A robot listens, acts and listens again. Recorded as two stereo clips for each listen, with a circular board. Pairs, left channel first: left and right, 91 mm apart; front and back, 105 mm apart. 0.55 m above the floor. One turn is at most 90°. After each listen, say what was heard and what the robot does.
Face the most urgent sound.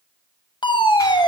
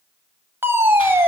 The fire alarm: 115° left. Turn 90° left.
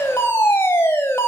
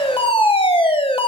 The fire alarm is now 30° left. Turn 30° left.
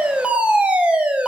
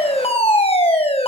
The fire alarm is now 15° right. Turn 15° right.
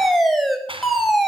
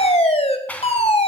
Found it: a fire alarm, straight ahead.